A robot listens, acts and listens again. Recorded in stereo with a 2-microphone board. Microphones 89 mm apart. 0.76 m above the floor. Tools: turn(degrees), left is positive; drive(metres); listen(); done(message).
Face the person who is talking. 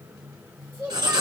turn(degrees=-25)
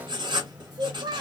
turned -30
turn(degrees=-125)
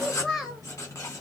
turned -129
done("Facing the child speaking.")